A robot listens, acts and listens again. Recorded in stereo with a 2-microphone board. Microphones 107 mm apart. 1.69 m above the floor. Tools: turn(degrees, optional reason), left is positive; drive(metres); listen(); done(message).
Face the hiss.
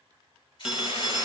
turn(degrees=50, reason="The hiss: about 50° left or 130° left.")
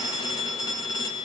listen()
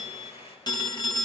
turn(degrees=80, reason="So it is at 80° left.")
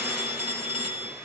listen()
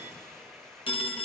done("Facing the hiss, over 4 m away.")